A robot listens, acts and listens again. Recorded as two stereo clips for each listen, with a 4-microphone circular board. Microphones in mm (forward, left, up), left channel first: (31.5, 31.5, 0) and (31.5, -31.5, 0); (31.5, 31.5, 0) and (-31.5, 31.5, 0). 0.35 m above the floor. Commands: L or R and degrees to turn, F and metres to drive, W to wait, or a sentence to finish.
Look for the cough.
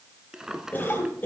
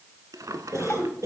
L150
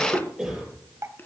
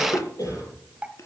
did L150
Facing the cough.